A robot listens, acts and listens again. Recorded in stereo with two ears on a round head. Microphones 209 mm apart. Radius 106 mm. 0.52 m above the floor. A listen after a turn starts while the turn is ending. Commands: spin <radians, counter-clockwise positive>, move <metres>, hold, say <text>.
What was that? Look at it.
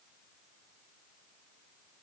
hold
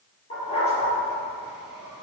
spin 0.44
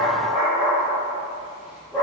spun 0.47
say Facing the dog barking, over 4 m away.